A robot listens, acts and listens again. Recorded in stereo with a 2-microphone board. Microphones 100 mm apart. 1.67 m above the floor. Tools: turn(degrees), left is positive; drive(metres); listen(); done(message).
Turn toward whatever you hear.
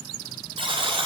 turn(degrees=-65)
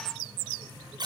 turn(degrees=-50)
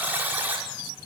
turn(degrees=-20)
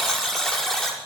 done("Found it: a buzzer, straight ahead.")